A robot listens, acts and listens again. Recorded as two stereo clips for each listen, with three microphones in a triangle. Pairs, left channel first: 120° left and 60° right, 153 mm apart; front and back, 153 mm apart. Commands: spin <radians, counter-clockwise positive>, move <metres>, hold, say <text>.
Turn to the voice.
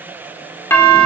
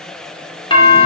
hold
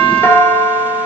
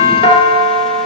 hold
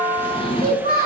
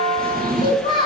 spin -1.05
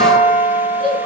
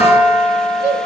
say Facing the child speaking, over 4 m away.